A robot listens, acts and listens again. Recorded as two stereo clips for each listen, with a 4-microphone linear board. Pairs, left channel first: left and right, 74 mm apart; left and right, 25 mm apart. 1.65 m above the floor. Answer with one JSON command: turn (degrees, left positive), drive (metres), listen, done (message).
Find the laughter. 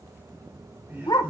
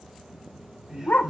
{"turn": -30}
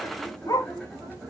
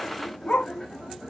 {"done": "Facing the laughter, over 4 m away."}